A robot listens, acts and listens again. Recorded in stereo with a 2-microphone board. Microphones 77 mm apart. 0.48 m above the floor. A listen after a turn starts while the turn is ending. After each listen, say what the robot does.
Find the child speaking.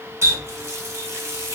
Keep listening.
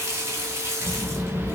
Turn 35° left.
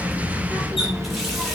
Found it: a child speaking, straight ahead, 1 to 2 m away.